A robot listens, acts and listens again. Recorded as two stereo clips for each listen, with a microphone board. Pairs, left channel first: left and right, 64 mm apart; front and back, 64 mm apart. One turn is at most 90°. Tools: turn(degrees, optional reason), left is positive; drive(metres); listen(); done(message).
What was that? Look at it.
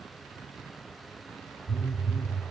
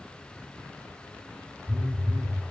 turn(degrees=90, reason="The phone buzzing: 115° left.")
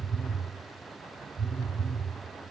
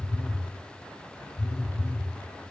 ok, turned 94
turn(degrees=20, reason="The phone buzzing is now 20° left.")
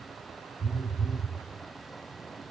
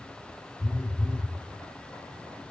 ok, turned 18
done("Facing the phone buzzing, 1 to 2 m away.")